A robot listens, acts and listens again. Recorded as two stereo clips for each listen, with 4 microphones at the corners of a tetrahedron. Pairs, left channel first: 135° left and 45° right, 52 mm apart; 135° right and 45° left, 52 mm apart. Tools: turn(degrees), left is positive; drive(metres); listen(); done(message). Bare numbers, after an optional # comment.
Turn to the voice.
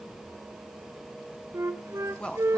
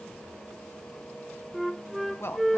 # The man speaking: 160° right.
turn(-160)
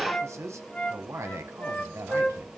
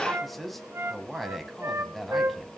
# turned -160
# The man speaking is now 45° right.
turn(-45)
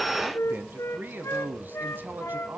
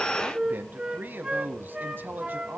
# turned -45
done("Found it: a man speaking, straight ahead, 1 to 2 m away.")